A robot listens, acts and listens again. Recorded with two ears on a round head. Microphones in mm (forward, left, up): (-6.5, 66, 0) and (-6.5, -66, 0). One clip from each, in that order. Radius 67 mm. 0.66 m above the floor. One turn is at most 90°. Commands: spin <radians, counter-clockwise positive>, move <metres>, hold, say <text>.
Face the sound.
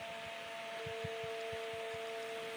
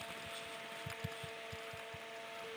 hold
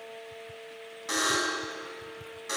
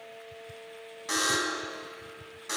spin -0.52
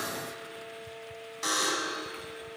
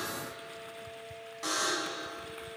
spin 0.44
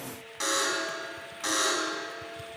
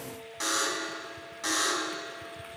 say Found it: a buzzer, straight ahead.